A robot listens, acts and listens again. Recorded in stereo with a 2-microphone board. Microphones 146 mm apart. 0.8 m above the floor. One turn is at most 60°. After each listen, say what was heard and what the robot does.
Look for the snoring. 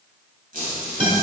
Keep listening.
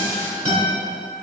Keep listening.
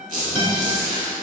I can't make out snoring to turn to.